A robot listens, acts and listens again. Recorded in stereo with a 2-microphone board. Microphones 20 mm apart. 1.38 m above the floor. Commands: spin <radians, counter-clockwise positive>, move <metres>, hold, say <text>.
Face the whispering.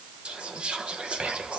spin -1.31
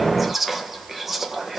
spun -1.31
spin -0.26
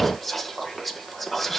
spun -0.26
say Facing the whispering, under 1 m away.